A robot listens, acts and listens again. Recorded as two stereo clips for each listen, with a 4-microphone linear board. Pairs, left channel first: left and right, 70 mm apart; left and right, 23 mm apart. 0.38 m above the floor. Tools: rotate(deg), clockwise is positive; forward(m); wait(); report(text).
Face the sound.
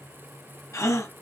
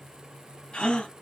rotate(-45)
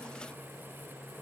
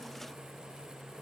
wait()
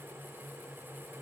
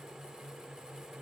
report("I heard a gasp, but can't make it out now. It was about straight ahead or 90° left.")